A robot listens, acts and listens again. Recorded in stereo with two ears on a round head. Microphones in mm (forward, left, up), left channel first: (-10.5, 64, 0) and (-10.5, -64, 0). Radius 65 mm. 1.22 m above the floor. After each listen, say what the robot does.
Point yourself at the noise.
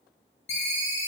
Turn 50° left.
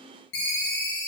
Turn 80° left.
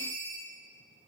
Turn 20° right.
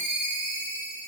Turn 10° right.
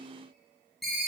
Facing the ringtone.